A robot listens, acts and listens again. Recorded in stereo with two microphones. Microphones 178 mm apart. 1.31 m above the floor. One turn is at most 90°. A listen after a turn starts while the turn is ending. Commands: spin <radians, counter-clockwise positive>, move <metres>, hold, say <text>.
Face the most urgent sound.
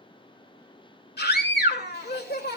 spin 1.13
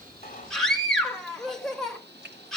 say Found it: a scream, straight ahead.